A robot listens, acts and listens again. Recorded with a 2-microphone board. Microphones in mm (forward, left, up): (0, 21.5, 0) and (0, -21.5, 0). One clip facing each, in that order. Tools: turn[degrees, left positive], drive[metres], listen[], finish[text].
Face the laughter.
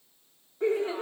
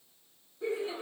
Thought: The laughter: about 55° left or 125° left.
Action: turn[55]
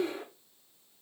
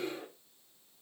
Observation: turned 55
Thought: So it is at 65° left.
Action: turn[65]
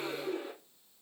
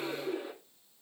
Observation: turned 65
Action: finish[Facing the laughter.]